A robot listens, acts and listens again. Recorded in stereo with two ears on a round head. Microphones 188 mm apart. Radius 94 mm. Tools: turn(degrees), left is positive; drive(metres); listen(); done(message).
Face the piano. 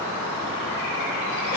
listen()
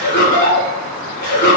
listen()
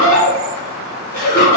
done("I can't make out a piano to turn to.")